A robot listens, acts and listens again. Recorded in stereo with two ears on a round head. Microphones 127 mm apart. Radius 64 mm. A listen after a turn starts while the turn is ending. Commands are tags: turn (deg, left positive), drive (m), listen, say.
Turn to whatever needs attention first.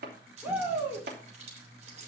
<turn deg="-30"/>
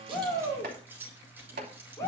<turn deg="20"/>
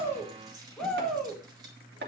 <say>Facing the shout.</say>